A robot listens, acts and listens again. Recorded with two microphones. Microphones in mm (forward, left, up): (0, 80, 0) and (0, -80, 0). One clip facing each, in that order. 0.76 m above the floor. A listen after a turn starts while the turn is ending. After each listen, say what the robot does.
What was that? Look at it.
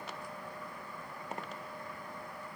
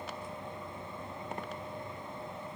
Keep listening.
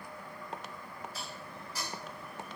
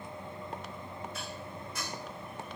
Turn 35° left.
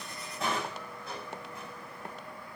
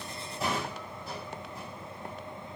Facing the dishes clattering, 2 to 4 m away.